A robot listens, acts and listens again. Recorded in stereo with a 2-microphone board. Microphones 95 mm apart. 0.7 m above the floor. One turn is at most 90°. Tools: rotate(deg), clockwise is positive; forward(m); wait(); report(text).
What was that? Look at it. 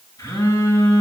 rotate(-40)
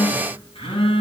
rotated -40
rotate(-90)
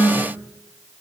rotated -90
rotate(-10)
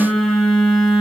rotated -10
report("Facing the phone buzzing.")